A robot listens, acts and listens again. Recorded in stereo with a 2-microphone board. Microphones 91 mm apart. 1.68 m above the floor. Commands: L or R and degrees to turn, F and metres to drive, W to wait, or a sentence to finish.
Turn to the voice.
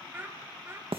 R25
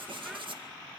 W
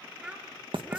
R30
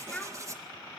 L10
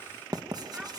W
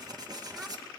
W
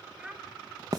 R10
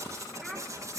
W
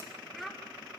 Found it: a child speaking, straight ahead.